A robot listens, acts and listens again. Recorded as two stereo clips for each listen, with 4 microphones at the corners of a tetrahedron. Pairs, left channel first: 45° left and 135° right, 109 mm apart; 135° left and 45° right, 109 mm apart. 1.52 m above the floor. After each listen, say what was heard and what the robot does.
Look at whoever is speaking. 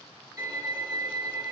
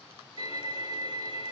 Keep listening.
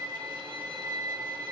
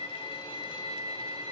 Keep listening.
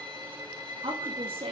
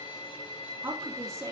The woman speaking: 110° right. Turn 110° right.
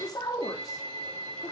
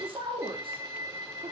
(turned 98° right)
The woman speaking is now 10° right. Turn 10° right.
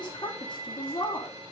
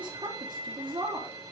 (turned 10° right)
Found it: a woman speaking, straight ahead, 2 to 4 m away.